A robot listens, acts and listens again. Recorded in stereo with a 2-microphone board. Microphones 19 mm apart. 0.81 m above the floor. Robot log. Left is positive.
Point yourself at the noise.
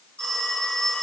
cmd yaw +90
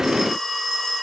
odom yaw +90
end: Found it: a phone ringing, straight ahead.